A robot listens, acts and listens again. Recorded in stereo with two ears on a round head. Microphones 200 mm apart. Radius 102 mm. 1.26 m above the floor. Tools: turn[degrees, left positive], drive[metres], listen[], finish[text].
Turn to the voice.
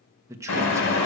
Action: turn[-30]
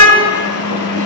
Action: listen[]
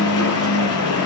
Action: listen[]
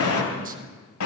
Action: finish[I heard a man speaking, but can't make it out now. It was about 15° left or 135° right.]